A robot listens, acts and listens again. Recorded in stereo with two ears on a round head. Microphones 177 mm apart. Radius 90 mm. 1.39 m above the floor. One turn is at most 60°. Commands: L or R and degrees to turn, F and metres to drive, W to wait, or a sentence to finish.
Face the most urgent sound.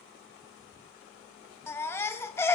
L30
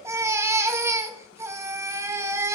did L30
R15
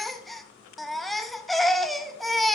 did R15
Facing the baby crying.